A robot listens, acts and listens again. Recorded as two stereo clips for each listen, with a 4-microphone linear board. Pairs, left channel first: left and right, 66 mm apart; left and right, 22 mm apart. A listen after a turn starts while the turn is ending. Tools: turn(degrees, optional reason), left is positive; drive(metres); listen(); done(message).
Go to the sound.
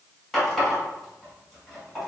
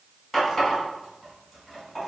turn(degrees=30)
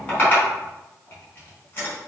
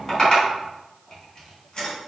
turn(degrees=145, reason="So it is at 145° left.")
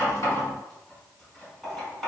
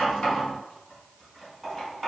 drive(metres=1.0)
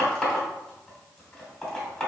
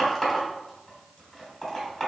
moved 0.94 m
turn(degrees=10, reason="The running tap is now 10° left.")
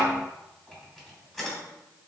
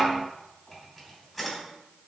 drive(metres=1.0)
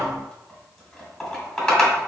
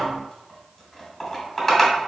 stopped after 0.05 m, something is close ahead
done("I am next to the running tap.")